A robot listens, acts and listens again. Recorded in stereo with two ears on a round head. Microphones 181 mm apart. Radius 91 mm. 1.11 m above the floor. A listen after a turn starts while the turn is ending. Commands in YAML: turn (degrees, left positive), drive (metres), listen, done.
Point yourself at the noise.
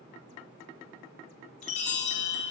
turn: 35
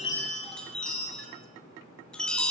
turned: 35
done: "Found it: a chime, straight ahead."